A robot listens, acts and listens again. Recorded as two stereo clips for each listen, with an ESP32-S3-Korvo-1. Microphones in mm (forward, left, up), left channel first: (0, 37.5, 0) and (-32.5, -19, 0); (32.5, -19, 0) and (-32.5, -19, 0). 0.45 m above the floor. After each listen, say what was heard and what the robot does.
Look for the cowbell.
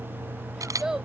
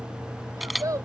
Keep listening.
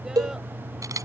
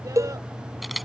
The cowbell: 140° right. Turn 140° right.
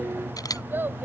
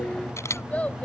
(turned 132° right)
Keep listening.
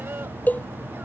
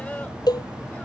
Found it: a cowbell, straight ahead.